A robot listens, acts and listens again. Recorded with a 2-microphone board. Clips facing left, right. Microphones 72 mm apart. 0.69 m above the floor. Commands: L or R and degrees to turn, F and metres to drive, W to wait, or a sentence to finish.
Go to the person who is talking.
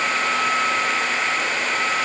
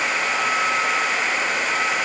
W
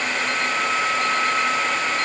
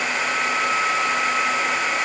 W
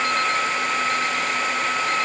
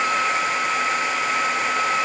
I can't make out anyone speaking.